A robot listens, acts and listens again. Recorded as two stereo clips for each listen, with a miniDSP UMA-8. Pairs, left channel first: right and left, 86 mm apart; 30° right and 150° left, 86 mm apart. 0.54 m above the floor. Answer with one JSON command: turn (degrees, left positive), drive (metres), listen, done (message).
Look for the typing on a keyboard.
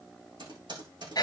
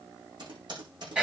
{"turn": 120}
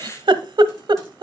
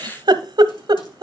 {"listen": true}
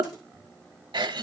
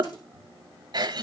{"listen": true}
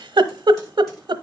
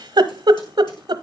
{"done": "Facing where the typing on a keyboard came from. I can't hear it now."}